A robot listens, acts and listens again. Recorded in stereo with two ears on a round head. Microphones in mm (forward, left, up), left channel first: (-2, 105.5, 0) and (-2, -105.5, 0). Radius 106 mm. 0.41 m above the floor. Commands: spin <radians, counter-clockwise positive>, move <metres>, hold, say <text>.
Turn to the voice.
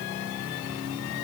hold
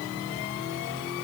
hold
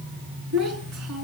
spin -1.22
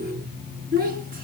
spin -0.70
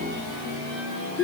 say Found it: a child speaking, straight ahead.